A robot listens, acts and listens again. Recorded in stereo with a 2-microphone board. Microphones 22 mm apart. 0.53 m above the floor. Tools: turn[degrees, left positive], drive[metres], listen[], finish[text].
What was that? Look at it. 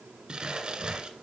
Thought: The crumpling: about 40° right or 140° right.
Action: turn[-40]
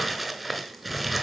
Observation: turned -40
Action: finish[Facing the crumpling.]